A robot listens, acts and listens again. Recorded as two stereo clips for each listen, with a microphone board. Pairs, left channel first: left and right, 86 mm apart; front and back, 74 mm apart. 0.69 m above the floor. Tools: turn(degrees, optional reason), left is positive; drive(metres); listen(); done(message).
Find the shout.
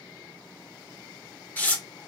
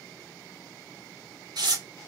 listen()
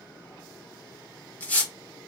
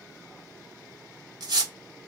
listen()
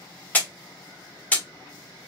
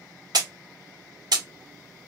done("I can't make out a shout, only tearing paper.")